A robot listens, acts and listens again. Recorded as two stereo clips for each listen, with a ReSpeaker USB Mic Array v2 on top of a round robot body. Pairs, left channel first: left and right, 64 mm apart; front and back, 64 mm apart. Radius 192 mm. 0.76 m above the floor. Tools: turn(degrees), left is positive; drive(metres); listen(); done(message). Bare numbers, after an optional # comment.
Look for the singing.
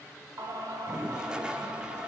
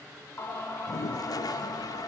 # The singing: 45° right.
turn(-45)
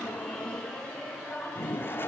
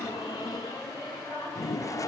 # The singing is now 15° left.
turn(15)
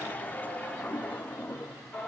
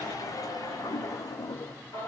# The singing is now 15° left.
turn(15)
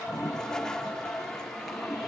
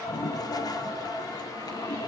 done("Facing the singing.")